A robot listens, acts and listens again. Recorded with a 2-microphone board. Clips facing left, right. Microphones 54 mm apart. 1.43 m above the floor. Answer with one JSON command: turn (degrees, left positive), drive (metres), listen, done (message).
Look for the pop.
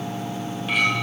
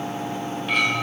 {"listen": true}
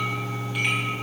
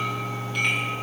{"listen": true}
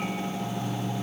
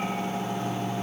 {"done": "I can't make out a pop, only a clink."}